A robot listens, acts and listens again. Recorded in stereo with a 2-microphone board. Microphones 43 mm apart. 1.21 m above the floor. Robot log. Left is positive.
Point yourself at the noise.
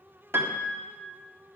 note: The piano: about 65° right or 115° right.
cmd yaw -65
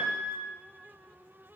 note: So it is at 45° right.
cmd yaw -45
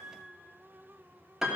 note: The piano is now 10° right.
cmd yaw -10
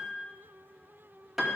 end: Facing the piano, 1 to 2 m away.